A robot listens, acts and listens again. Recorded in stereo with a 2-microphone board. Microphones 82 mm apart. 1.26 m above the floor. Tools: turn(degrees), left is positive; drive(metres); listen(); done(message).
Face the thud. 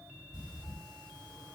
listen()
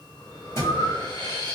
turn(degrees=35)
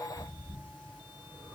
listen()
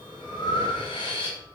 done("I heard a thud, but can't make it out now. It was about straight ahead or 110° left.")